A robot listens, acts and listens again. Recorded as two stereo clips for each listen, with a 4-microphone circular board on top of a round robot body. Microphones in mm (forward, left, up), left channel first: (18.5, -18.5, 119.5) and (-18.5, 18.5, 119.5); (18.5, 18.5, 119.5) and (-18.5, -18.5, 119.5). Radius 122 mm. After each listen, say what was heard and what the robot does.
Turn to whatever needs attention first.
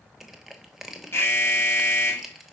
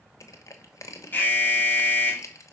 The alarm: 10° right. Turn 10° right.
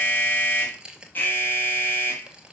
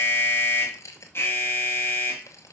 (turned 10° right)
Facing the alarm, 2 to 4 m away.